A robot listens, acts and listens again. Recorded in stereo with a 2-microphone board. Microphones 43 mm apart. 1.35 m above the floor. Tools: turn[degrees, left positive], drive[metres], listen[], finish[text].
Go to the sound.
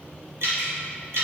Action: turn[-90]
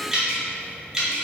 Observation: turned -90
Thought: So it is at 15° right.
Action: turn[-15]
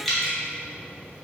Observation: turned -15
Action: drive[1.0]
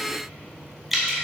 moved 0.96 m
Action: drive[1.0]
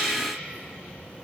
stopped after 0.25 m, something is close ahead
Thought: The dripping is now 10° right.
Action: turn[-10]
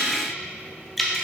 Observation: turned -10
Action: finish[I am next to the dripping.]